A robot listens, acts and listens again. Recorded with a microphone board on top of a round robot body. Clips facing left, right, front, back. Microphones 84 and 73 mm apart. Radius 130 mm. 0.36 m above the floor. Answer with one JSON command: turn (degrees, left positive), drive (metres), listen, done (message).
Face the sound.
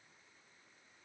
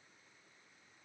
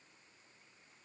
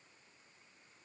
{"listen": true}
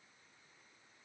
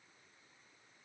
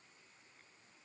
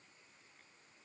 {"listen": true}
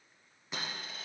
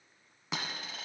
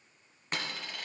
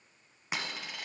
{"turn": -95}
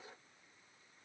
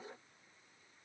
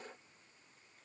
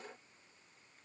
{"done": "I heard a dropped coin from this way, but can't make it out now."}